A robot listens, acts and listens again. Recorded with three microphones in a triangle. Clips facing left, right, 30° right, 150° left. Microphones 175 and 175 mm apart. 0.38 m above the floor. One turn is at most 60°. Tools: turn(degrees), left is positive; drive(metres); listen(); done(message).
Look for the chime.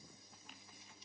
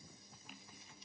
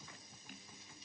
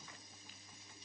listen()
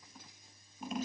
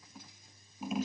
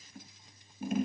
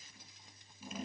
listen()
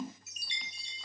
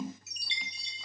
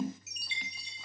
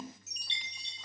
turn(degrees=50)
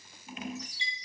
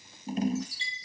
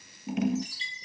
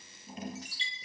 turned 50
turn(degrees=15)
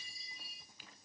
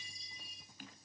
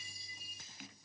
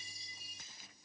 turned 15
done("Facing the chime, 2 to 4 m away.")